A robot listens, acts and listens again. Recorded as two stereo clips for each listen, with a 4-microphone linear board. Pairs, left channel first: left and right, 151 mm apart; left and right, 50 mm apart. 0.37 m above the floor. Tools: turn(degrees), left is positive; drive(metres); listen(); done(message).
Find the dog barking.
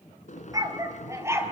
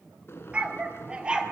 turn(degrees=-20)
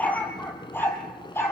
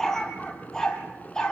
turn(degrees=15)
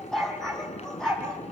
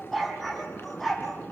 done("Facing the dog barking.")